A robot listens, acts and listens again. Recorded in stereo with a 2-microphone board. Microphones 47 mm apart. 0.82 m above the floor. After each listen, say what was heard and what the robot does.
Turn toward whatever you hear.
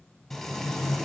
Turn 30° left.
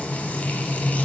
So it is at 145° left. Turn 145° left.
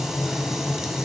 Found it: frying, straight ahead.